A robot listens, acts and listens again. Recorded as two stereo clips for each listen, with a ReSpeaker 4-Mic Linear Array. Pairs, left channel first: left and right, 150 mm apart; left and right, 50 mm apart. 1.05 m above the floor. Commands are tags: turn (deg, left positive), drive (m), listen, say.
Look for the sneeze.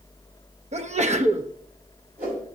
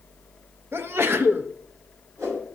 <turn deg="-50"/>
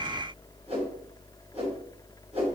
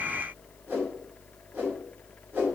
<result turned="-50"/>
<listen/>
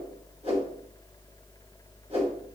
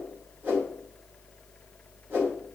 <say>I heard a sneeze, but can't make it out now. It was about straight ahead or 80° right.</say>